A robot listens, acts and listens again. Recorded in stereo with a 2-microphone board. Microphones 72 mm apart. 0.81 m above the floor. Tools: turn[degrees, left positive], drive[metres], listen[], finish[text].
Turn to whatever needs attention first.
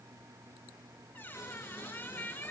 Action: listen[]
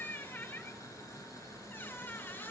Action: listen[]
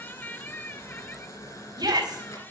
Thought: The shout: about 65° right or 115° right.
Action: turn[-65]
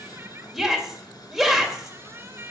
Action: finish[Facing the shout.]